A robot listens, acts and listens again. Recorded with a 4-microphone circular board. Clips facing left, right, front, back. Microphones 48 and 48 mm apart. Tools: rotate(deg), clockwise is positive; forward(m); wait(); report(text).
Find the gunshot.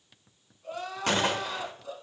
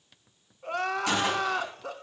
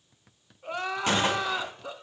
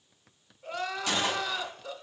rotate(-50)
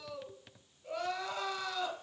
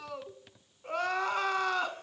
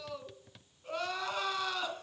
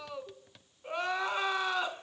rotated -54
report("Facing where the gunshot came from. I can't hear it now.")